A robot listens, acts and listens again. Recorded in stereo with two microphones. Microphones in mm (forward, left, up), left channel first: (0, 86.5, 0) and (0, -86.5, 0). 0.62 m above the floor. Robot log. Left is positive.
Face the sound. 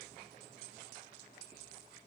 cmd idle
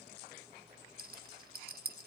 note: The rattle: about 55° right or 125° right.
cmd yaw -55
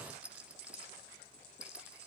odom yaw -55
end: Facing the rattle, under 1 m away.